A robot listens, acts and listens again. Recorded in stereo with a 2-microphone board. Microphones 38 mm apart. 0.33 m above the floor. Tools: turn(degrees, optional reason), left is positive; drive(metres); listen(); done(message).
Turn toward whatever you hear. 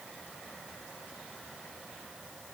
listen()
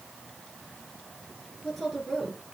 turn(degrees=30)
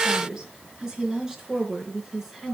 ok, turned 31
turn(degrees=-30)
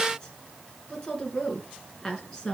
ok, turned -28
turn(degrees=20, reason="So it is at 20° left.")
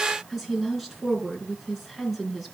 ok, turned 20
done("Facing the woman speaking.")